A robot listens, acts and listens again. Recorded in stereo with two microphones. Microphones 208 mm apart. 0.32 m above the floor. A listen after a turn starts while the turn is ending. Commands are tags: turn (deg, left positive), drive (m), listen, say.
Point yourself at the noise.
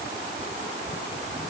<listen/>
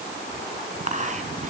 <turn deg="-35"/>
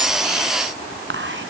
<turn deg="-105"/>
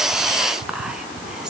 <say>Facing the whispering.</say>